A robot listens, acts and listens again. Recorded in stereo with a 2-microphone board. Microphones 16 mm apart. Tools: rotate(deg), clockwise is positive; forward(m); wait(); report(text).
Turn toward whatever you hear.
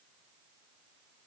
wait()
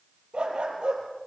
rotate(70)
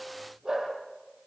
rotate(40)
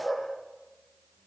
rotate(15)
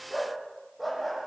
report("Facing the dog barking, over 4 m away.")